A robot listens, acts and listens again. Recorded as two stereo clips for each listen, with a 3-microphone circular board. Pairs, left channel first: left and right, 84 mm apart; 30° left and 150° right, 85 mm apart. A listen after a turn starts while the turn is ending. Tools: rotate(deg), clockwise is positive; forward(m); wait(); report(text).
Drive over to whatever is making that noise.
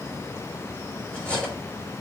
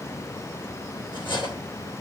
rotate(-15)
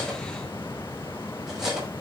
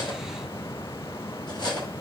forward(1.0)
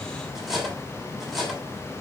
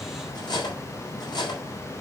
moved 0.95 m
forward(1.0)
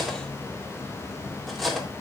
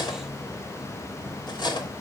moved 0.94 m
forward(1.0)
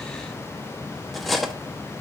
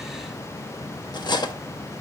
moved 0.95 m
forward(1.0)
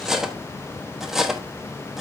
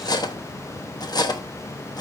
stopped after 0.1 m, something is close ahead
report("Arrived at the cutlery clinking, straight ahead.")